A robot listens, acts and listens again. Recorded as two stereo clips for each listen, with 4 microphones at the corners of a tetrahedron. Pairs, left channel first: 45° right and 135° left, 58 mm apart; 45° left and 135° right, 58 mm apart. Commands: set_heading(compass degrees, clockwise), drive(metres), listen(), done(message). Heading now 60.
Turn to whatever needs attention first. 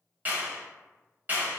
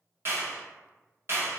listen()
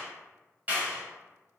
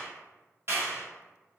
listen()
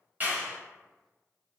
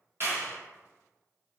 done("I can't make out anything urgent to turn to.")